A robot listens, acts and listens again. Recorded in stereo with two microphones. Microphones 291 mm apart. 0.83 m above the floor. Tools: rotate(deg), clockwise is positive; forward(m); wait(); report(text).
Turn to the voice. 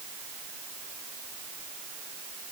wait()
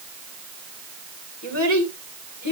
rotate(-90)
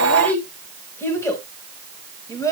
rotate(-10)
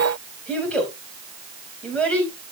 report("Facing the child speaking, over 4 m away.")